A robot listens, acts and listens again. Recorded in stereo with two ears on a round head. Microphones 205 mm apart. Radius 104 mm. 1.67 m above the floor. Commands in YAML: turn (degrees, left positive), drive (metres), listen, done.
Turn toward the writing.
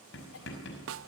turn: 55
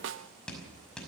done: "Facing the writing."